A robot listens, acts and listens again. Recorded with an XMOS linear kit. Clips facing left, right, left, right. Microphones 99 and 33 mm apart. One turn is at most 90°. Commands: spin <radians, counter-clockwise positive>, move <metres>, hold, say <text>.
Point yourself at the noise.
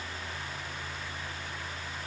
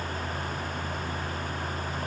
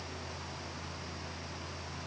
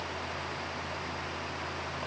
hold
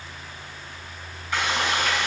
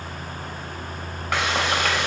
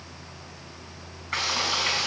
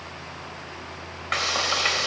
spin -1.57
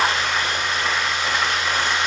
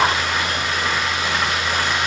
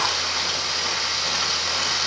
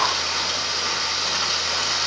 say Found it: frying, straight ahead, 2 to 4 m away.